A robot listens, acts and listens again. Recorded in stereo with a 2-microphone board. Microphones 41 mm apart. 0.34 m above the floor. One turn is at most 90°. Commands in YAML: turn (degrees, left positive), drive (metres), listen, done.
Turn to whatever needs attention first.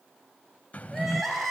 turn: 30
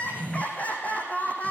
turn: 90
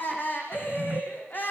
turn: 50
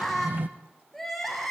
done: "Found it: crying, straight ahead, over 4 m away."